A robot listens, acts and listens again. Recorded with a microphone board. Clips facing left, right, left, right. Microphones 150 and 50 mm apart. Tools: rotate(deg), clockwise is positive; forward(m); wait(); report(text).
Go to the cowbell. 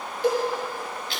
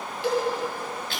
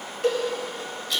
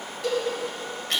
rotate(-45)
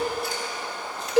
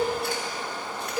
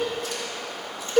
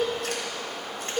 rotate(-85)
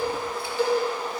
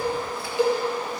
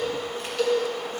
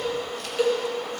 rotate(15)
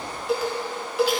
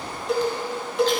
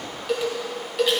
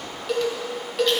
forward(1.0)
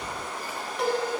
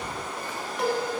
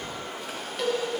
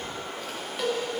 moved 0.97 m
forward(1.0)
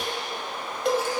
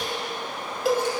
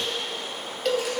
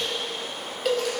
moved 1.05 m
forward(1.0)
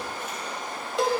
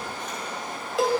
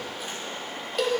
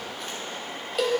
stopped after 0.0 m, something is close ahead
report("I am next to the cowbell.")